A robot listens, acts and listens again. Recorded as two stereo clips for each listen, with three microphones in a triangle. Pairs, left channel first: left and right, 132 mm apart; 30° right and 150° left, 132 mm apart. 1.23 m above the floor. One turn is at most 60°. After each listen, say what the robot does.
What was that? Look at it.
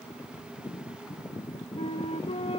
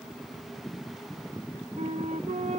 Turn 60° left.
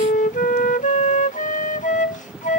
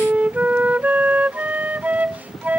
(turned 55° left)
Turn 60° left.
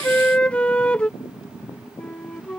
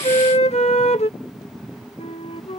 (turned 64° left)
Turn 10° left.
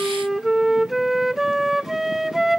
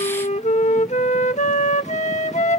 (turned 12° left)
Facing the flute.